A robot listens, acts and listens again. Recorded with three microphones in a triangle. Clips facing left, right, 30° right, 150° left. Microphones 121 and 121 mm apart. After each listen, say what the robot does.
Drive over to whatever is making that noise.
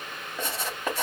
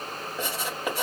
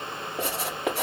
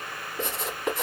Drive 1.0 m forward.
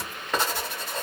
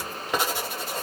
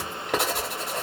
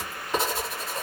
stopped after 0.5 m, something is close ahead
Turn 10° right.
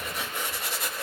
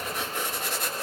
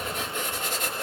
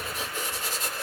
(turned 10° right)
Something is in my way. I am facing the writing but have not reached it.